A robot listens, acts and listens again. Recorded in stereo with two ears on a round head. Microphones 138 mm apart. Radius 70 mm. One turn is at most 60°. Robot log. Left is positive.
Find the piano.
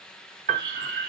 note: The piano: about 50° right or 130° right.
cmd yaw -50
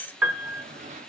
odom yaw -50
note: So it is at 10° right.
cmd yaw -10
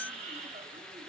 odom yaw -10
cmd idle
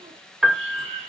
end: Facing the piano.